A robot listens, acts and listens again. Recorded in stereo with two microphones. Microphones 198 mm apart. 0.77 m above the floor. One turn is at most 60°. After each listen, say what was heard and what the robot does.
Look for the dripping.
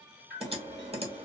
The dripping: about 55° right or 125° right. Turn 55° right.
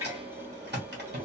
So it is at 15° right. Turn 15° right.
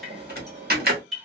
Found it: dripping, straight ahead.